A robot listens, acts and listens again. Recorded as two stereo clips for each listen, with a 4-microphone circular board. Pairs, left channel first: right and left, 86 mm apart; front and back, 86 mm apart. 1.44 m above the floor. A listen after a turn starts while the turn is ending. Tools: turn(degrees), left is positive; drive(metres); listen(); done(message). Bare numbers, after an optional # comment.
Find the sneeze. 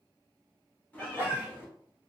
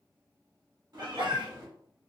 # The sneeze: 150° left.
turn(150)
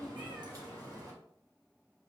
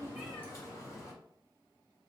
done("Facing where the sneeze came from. I can't hear it now.")